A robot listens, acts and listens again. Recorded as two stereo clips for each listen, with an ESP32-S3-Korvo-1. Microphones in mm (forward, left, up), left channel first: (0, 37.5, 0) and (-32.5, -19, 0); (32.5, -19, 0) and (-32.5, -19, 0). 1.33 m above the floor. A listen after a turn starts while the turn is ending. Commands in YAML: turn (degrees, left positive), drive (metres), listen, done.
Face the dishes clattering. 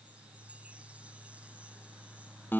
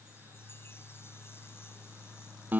listen: true
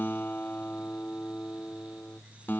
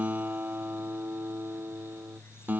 listen: true
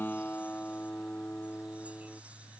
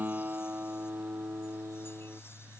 done: "I can't make out dishes clattering to turn to."